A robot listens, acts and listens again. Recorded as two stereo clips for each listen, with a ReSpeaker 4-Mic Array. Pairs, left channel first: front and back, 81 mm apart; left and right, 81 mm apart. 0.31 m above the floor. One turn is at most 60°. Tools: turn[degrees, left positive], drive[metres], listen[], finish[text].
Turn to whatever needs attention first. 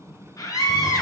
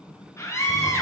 Thought: The scream: 40° left.
Action: turn[40]
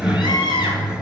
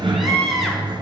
Action: finish[Facing the scream.]